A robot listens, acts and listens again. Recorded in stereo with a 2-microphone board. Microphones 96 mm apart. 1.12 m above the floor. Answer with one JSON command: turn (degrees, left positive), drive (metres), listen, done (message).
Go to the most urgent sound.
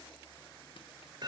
{"listen": true}
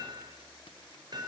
{"listen": true}
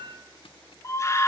{"turn": 30}
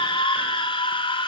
{"turn": 115}
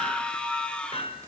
{"turn": 10}
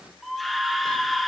{"drive": 1.0}
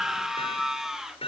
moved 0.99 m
{"drive": 1.0}
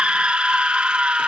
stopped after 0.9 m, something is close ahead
{"turn": -10}
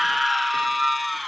{"done": "Arrived at the scream, straight ahead."}